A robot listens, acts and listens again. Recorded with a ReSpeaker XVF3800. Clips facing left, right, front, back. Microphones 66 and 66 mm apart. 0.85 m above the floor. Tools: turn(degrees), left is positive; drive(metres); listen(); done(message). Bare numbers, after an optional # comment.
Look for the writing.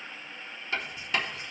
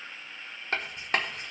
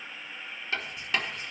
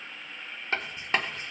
# The writing: 130° right.
turn(-130)
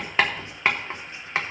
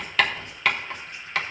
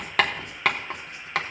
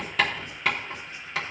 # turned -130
# The writing is now 25° left.
turn(25)
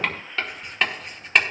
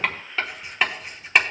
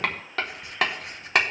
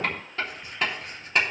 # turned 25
done("Found it: writing, straight ahead, 1 to 2 m away.")